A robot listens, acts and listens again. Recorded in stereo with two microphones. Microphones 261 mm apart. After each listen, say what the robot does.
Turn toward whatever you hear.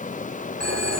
Turn 90° left.
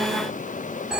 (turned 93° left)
Facing the phone ringing.